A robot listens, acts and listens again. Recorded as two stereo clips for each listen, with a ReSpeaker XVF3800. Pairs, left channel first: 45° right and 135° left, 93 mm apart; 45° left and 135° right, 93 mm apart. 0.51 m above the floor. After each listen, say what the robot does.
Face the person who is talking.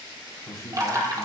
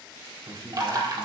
Turn 95° right.
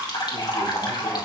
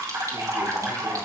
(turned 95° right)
Keep listening.
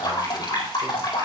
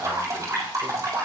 Keep listening.
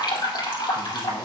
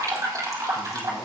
Found it: a man speaking, straight ahead.